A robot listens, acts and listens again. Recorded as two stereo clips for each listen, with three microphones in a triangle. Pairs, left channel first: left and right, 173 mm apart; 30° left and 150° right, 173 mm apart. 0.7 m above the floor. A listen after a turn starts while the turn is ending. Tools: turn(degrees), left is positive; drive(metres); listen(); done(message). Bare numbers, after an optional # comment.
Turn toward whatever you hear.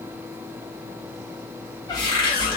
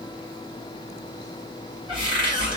# The cupboard door: 155° left.
turn(155)
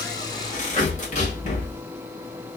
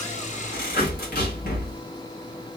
# The cupboard door is now 50° left.
turn(50)
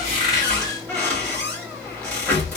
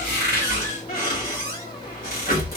# The cupboard door is now 10° left.
turn(10)
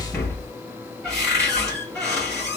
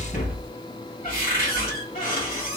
done("Facing the cupboard door.")